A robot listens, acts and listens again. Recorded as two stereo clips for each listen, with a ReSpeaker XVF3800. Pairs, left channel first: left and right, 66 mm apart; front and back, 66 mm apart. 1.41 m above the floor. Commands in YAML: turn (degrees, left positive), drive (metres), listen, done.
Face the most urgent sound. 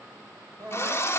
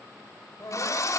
turn: -50
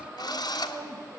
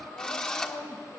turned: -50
turn: -10
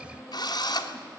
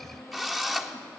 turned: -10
done: "Facing the crying, over 4 m away."